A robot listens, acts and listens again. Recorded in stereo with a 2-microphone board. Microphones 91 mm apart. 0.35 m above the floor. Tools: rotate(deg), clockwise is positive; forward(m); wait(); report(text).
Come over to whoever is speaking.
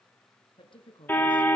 rotate(-65)
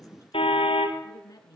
rotate(-40)
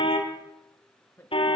rotate(-25)
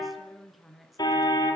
forward(1.0)
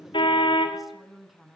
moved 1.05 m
forward(1.0)
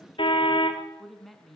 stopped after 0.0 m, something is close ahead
report("Something is in my way. I am facing the woman speaking but have not reached it.")